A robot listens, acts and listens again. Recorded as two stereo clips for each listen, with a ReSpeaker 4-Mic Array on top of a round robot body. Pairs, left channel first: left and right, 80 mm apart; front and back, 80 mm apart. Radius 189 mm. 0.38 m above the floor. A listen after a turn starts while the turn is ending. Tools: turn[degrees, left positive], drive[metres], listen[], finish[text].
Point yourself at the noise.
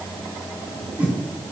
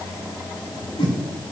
Thought: The whoosh: 15° right.
Action: turn[-15]
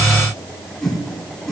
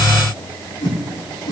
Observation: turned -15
Action: finish[Found it: a whoosh, straight ahead, 2 to 4 m away.]